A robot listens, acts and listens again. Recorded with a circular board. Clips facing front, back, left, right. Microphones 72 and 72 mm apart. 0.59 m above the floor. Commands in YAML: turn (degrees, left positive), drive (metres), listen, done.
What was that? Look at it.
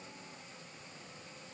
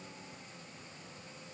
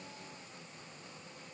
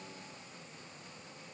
listen: true
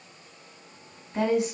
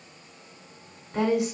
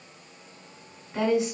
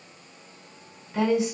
turn: 160
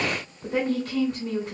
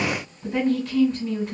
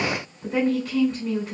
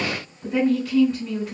done: "Facing the woman speaking."